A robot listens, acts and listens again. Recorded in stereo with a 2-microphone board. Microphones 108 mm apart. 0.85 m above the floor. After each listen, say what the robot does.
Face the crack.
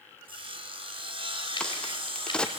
Turn 30° left.
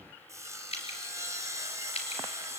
Keep listening.
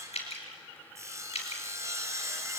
I heard a crack, but can't make it out now. It was about 20° right or 140° left.